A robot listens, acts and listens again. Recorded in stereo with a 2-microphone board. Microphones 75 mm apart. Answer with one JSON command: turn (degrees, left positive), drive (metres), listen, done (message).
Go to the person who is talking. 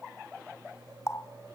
{"listen": true}
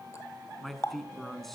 {"turn": 30}
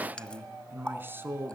{"turn": -30}
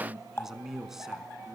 {"drive": 1.0}
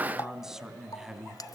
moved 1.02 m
{"drive": 1.0}
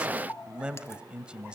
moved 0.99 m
{"turn": -15}
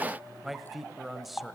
{"drive": 1.0}
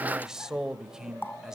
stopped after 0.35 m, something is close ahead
{"turn": -10}
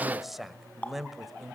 {"done": "I am next to the man speaking."}